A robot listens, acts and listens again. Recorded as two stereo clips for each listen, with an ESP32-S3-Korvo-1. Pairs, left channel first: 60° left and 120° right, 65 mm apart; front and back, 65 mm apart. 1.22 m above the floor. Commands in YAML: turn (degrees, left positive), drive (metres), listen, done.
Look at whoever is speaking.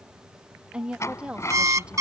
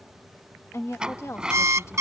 turn: -45
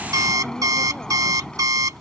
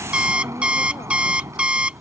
listen: true
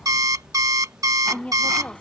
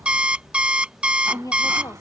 turn: -10
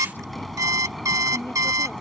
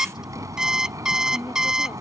listen: true
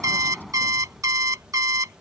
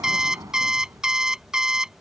listen: true
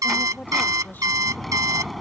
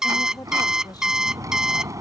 done: "I heard a woman speaking from this way, but can't make it out now."